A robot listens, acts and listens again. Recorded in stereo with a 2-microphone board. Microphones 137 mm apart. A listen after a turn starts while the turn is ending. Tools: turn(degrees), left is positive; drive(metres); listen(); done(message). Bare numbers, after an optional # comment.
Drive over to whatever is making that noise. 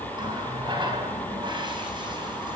# The running tap: about 35° right or 145° right.
turn(-35)
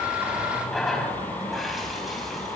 drive(1.0)
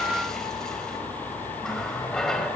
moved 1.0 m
drive(1.0)
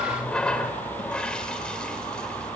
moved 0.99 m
drive(1.0)
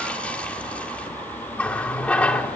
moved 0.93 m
# The running tap is now 10° left.
turn(10)
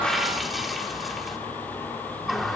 drive(1.0)
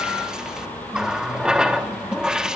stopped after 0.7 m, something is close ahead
done("I am next to the running tap.")